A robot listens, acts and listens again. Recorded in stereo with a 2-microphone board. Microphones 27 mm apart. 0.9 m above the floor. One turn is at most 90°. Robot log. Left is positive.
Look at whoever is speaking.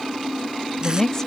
note: The woman speaking: about 20° left or 160° left.
cmd yaw +20
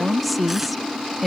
end: Facing the woman speaking.